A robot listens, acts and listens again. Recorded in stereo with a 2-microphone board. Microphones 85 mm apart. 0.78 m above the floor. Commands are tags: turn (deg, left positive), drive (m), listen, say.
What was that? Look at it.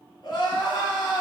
<turn deg="60"/>
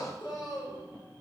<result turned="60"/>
<turn deg="55"/>
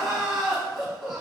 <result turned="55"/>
<say>Found it: crying, straight ahead.</say>